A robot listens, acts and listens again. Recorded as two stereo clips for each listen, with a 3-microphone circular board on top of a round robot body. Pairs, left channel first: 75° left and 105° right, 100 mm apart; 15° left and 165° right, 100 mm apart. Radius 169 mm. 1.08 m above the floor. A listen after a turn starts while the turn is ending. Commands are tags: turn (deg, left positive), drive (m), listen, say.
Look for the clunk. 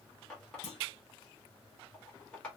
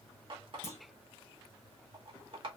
<turn deg="80"/>
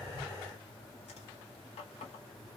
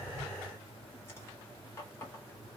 <say>Facing where the clunk came from. I can't hear it now.</say>